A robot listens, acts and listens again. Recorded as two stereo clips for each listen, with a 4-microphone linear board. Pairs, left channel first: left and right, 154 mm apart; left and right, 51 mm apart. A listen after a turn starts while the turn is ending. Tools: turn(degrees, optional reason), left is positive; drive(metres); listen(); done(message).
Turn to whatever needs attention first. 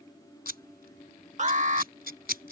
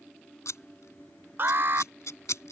turn(degrees=-50, reason="The alarm: about 50° right or 130° right.")
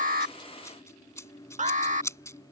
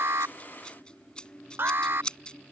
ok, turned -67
turn(degrees=-55, reason="So it is at 55° right.")
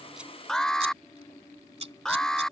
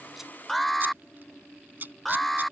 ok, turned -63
done("Facing the alarm.")